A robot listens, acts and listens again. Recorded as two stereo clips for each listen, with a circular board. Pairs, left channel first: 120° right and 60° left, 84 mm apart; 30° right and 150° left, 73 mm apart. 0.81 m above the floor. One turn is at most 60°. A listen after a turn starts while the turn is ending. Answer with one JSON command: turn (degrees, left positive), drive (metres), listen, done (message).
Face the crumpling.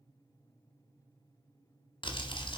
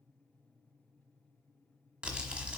{"turn": -60}
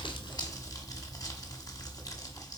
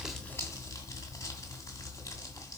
{"turn": -60}
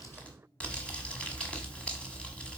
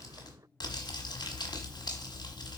{"turn": -45}
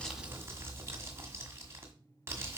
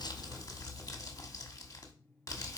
{"done": "Found it: crumpling, straight ahead."}